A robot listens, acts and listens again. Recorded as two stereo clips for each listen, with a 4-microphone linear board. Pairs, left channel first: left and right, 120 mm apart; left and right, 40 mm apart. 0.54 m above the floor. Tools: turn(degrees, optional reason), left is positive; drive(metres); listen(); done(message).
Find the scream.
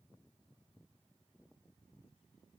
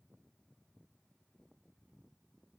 listen()
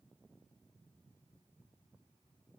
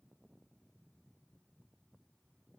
listen()
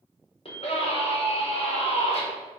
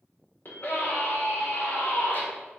turn(degrees=55, reason="The scream: about 55° left or 125° left.")
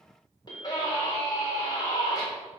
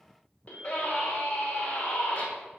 turn(degrees=45, reason="So it is at 45° left.")
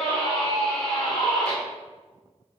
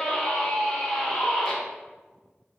turn(degrees=10, reason="The scream is now 10° left.")
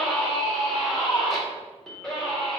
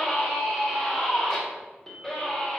done("Found it: a scream, straight ahead.")